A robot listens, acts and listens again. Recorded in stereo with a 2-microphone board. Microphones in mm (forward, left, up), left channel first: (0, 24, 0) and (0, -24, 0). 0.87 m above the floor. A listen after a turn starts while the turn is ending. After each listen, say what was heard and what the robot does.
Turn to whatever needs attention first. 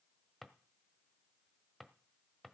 Keep listening.
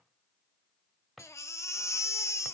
Turn 90° left.
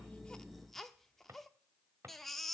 Facing the baby crying, under 1 m away.